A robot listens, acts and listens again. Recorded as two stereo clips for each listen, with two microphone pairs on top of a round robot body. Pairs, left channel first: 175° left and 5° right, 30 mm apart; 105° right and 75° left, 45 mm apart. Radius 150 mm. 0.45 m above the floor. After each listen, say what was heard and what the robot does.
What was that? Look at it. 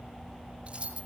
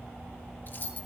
The keys jangling: 55° right. Turn 55° right.
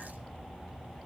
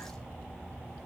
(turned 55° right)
Keep listening.
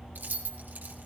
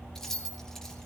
The keys jangling is now 20° right. Turn 20° right.
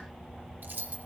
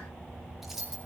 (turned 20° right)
Found it: keys jangling, straight ahead, over 4 m away.